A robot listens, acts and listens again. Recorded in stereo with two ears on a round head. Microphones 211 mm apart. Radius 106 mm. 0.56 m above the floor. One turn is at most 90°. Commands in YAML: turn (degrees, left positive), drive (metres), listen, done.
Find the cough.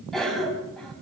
turn: 30
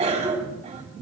turn: -30
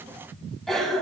done: "Found it: a cough, straight ahead."